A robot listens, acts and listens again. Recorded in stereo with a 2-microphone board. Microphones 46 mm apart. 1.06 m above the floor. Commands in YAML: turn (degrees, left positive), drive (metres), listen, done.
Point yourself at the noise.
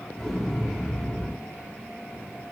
turn: 30
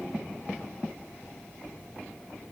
listen: true
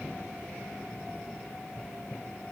done: "I heard an explosion, but can't make it out now. It was about 25° right or 145° left."